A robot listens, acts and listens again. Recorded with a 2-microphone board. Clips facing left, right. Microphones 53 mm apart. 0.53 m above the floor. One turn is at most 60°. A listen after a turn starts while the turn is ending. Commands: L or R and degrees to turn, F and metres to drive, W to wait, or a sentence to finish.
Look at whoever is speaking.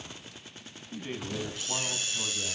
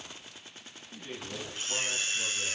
L35
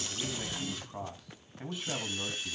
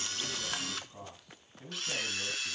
L60
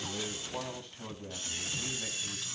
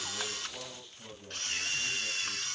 L60
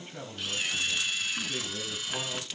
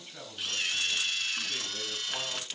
W
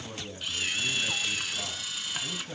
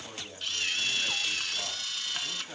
Facing the man speaking, over 4 m away.